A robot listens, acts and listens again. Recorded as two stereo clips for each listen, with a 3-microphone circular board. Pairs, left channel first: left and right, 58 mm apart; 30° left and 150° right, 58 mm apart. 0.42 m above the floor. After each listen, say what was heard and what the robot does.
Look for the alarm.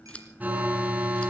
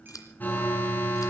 The alarm: 30° right. Turn 30° right.
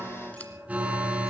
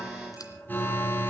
The alarm is now 25° right. Turn 25° right.
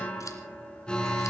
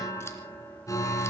The alarm is now 20° left. Turn 20° left.
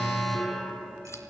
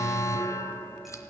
Facing the alarm.